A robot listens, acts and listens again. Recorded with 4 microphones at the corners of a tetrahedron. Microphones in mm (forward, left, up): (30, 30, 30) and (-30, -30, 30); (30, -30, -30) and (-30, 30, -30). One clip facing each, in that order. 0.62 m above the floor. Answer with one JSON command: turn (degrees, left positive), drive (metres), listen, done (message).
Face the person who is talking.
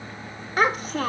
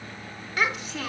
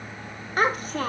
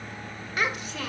{"done": "Found it: a child speaking, straight ahead, 1 to 2 m away."}